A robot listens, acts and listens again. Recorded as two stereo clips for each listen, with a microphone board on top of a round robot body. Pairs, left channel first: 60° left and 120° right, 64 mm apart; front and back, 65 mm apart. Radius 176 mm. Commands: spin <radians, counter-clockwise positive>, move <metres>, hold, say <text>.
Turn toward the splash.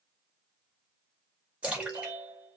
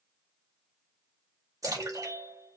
spin 2.97
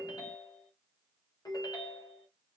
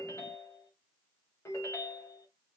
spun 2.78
spin 0.17
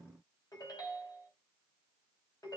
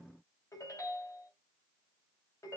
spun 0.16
say Facing where the splash came from. I can't hear it now.